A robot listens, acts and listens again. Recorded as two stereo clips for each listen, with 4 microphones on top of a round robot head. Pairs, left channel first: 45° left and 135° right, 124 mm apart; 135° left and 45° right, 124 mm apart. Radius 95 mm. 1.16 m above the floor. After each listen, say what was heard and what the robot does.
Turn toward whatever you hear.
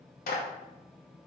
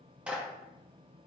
The clap: 35° left. Turn 35° left.
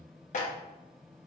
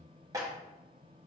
The clap is now 20° left. Turn 20° left.
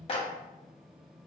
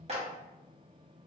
Facing the clap.